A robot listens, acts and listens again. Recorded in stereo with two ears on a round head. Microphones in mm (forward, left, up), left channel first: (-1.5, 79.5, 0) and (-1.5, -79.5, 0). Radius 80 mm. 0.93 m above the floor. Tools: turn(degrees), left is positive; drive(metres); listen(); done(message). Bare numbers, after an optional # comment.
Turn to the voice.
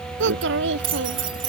turn(-90)
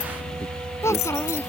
# So it is at 15° left.
turn(15)
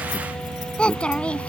done("Found it: a child speaking, straight ahead.")